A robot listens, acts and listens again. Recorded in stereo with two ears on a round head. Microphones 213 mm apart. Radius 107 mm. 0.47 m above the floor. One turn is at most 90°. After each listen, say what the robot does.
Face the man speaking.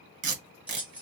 Keep listening.
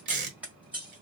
Keep listening.
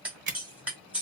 I can't make out a man speaking to turn to.